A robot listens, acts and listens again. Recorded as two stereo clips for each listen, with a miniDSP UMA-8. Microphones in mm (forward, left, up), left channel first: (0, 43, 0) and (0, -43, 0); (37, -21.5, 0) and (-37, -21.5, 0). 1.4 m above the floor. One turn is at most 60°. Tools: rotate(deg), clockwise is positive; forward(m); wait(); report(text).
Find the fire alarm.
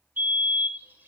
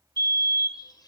rotate(60)
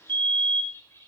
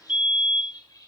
rotate(60)
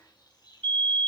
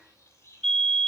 rotate(60)
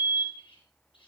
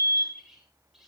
rotate(40)
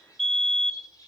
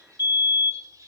report("Facing the fire alarm, 2 to 4 m away.")